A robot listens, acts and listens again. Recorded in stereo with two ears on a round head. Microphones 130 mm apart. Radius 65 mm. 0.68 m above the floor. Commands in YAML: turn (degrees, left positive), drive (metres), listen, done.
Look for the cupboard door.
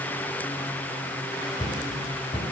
turn: 35
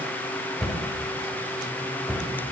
done: "Found it: a cupboard door, straight ahead."